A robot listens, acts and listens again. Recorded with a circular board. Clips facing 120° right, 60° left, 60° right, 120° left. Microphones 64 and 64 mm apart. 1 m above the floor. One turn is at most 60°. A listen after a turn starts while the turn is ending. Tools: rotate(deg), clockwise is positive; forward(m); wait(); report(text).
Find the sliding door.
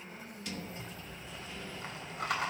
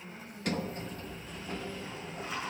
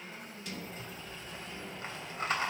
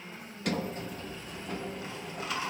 rotate(-60)
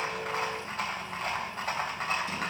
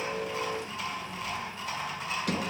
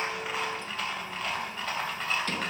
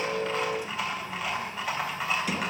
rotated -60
rotate(-40)
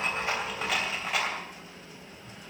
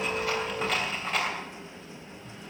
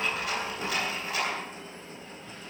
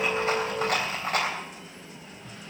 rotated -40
report("Facing the sliding door.")